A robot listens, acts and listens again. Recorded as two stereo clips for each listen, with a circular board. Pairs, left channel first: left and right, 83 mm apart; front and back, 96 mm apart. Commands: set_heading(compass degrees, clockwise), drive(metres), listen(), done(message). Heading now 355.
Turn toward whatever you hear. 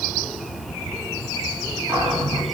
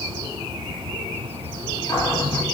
set_heading(40)
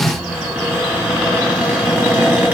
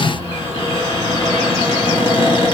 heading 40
set_heading(60)
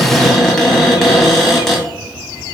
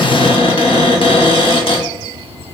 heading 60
done("Facing the cupboard door, 1 to 2 m away.")